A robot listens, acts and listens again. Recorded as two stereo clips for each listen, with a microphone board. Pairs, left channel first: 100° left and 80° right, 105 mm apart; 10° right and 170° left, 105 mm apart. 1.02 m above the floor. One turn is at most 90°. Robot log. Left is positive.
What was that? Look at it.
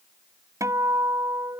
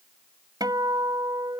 note: The guitar: 140° right.
cmd yaw -90
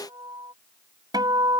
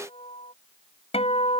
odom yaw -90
note: The guitar is now 30° right.
cmd yaw -30
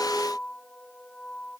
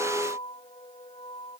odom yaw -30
note: The guitar is now 20° left.
cmd yaw +20
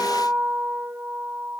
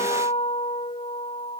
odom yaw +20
end: Found it: a guitar, straight ahead.